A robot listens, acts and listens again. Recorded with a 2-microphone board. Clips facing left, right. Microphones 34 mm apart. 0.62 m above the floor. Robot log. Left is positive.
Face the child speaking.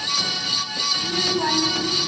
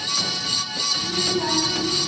note: The child speaking: about 30° left or 150° left.
cmd yaw +30
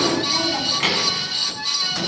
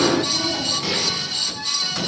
note: So it is at 115° left.
cmd yaw +115
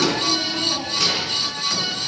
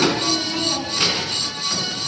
note: The child speaking is now 25° right.
cmd yaw -25
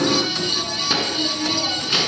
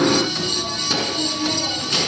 note: The child speaking is now 15° left.
cmd yaw +15
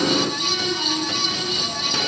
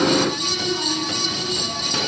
end: Facing the child speaking.